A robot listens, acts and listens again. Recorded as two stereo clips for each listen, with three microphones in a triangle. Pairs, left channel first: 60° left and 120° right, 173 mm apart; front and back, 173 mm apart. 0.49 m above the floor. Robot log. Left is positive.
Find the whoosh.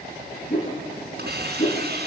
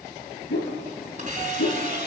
end: Facing the whoosh, 2 to 4 m away.